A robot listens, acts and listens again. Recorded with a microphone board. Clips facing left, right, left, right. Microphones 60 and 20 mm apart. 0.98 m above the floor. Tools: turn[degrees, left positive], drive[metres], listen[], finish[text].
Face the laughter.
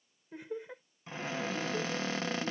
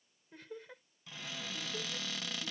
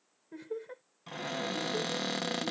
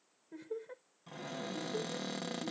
Thought: The laughter: about 20° left or 160° left.
Action: turn[20]
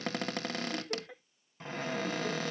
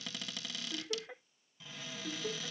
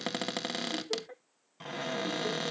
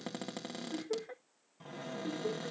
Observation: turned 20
Thought: So it is at 15° right.
Action: turn[-15]
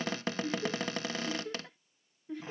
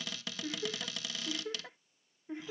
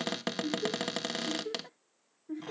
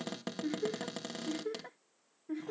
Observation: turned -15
Thought: The laughter is now 25° right.
Action: turn[-25]
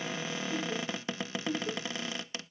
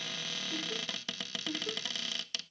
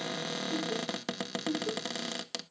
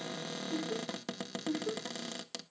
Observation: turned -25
Action: finish[Facing the laughter.]